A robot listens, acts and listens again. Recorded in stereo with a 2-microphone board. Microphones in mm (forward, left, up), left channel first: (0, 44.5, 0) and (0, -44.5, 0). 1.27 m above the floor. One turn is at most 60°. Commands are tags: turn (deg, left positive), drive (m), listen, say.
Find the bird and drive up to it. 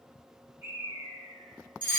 <turn deg="-30"/>
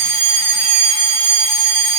<listen/>
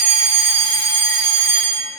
<listen/>
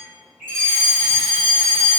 <drive m="1.0"/>
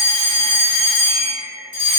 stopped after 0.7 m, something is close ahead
<say>Arrived at the bird, straight ahead.</say>